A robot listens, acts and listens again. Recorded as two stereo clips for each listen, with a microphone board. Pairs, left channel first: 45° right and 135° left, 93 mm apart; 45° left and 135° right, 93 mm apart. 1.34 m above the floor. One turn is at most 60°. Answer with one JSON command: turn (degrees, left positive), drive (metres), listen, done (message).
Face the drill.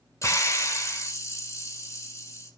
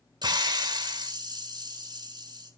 {"listen": true}
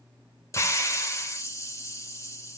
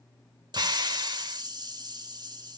{"listen": true}
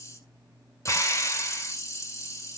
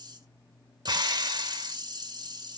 {"done": "I can't make out a drill to turn to."}